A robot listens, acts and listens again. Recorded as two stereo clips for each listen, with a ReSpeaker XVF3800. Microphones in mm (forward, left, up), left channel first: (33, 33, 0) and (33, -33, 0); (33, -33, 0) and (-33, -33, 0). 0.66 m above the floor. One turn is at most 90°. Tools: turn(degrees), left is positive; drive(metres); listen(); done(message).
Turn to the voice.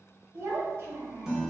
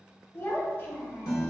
turn(degrees=-50)
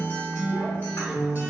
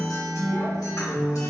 listen()
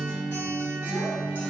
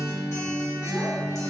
listen()
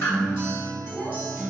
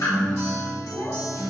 done("I heard a child speaking from this way, but can't make it out now.")